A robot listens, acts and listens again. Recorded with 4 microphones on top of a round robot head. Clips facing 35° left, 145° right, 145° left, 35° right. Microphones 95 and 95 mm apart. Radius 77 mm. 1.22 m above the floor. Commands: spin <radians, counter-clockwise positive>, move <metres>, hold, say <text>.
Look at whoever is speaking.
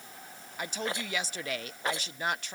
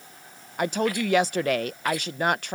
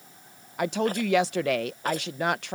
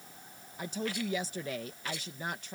spin 3.05
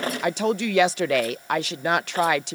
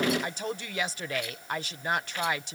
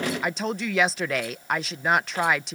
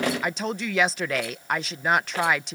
spin 0.96
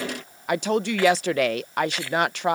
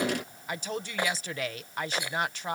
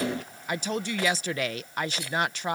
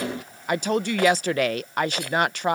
say Found it: a woman speaking, straight ahead.